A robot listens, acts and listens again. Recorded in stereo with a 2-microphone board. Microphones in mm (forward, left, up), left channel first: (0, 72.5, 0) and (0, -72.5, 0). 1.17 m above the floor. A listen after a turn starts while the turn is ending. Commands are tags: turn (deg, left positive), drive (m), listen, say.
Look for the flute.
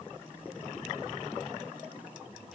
<listen/>
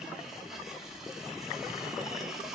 <listen/>
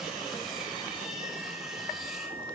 <turn deg="-30"/>
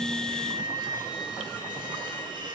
<say>Found it: a flute, straight ahead, 2 to 4 m away.</say>